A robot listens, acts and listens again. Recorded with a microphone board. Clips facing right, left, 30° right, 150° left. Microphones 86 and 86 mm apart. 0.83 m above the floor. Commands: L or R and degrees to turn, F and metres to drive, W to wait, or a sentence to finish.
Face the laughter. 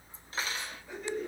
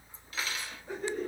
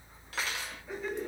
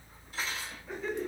L50
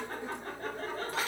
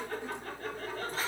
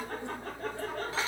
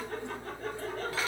R40
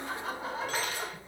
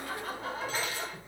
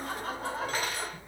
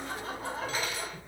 R25
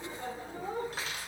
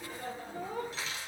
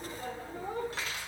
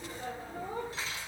R25
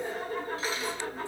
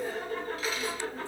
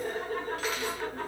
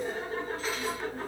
R10
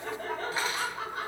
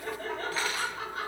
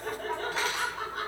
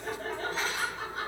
Facing the laughter.